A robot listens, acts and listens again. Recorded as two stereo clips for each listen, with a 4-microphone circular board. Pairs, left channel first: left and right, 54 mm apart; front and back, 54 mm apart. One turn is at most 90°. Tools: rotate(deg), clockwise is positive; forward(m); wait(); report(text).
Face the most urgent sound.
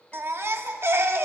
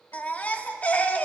rotate(60)
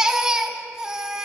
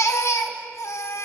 rotate(15)
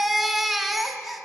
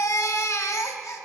report("Found it: a baby crying, straight ahead, 1 to 2 m away.")